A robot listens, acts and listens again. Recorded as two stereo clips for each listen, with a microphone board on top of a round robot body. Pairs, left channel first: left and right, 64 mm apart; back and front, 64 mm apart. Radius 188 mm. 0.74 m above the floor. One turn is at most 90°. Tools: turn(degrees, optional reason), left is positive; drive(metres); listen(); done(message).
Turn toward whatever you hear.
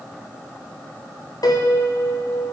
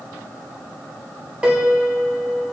turn(degrees=70, reason="The piano: 70° left.")
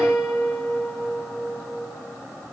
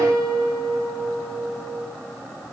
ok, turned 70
done("Facing the piano.")